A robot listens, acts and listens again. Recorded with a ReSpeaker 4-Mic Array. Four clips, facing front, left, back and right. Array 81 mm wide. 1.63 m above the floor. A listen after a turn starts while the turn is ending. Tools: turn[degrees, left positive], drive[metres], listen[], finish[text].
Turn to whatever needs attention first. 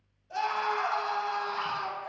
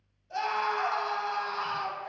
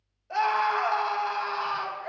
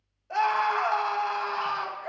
Thought: The scream: 125° right.
Action: turn[-125]
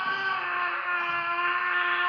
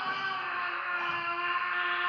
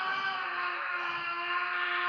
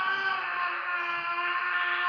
Thought: The scream is now 15° right.
Action: turn[-15]
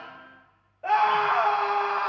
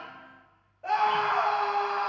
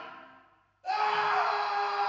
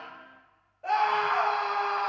Action: finish[Found it: a scream, straight ahead.]